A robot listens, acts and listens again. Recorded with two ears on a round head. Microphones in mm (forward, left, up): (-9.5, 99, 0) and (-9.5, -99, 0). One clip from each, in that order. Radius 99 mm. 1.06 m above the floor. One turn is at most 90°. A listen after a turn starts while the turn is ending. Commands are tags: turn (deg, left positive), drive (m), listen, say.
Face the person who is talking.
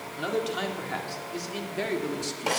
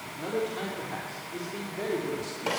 <turn deg="40"/>
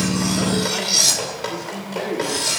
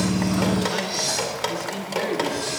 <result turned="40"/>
<turn deg="-25"/>
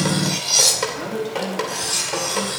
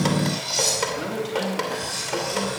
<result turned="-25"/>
<turn deg="-20"/>
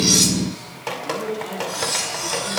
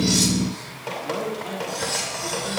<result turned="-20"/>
<say>Found it: a man speaking, straight ahead.</say>